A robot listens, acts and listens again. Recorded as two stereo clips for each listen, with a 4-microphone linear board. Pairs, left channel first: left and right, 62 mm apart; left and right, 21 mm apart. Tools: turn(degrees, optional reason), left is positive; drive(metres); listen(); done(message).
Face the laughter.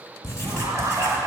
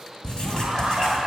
turn(degrees=-60, reason="The laughter: about 60° right or 120° right.")
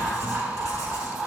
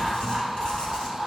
done("Found it: laughter, straight ahead, 2 to 4 m away.")